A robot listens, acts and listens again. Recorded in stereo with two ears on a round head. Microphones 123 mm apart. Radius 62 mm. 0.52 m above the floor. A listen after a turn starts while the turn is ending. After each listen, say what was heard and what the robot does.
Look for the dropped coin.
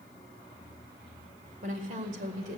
Keep listening.
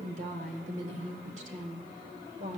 Keep listening.
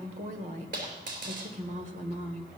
The dropped coin: about 65° right or 115° right. Turn 65° right.
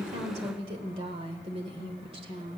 Keep listening.
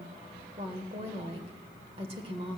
I heard a dropped coin, but can't make it out now. It was about straight ahead or 50° right.